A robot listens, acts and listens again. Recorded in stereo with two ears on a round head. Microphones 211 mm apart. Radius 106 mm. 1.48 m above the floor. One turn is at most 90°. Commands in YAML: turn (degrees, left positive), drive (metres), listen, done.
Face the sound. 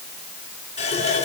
turn: 25
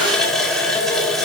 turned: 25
done: "Facing the running tap."